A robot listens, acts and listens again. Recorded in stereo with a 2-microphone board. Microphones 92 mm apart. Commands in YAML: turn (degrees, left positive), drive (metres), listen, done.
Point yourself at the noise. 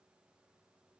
listen: true
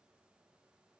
listen: true
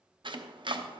turn: -60
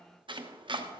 turn: -60
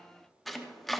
done: "Found it: chopping, straight ahead, 1 to 2 m away."